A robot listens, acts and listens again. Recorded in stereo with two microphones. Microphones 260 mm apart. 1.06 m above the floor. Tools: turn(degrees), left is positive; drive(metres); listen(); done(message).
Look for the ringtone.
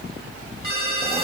turn(degrees=55)
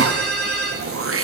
done("Found it: a ringtone, straight ahead.")